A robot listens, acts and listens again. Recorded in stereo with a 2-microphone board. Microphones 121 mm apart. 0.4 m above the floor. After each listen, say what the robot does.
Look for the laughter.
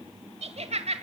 Turn 60° right.
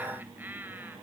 Turn 15° right.
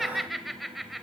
Facing the laughter, 1 to 2 m away.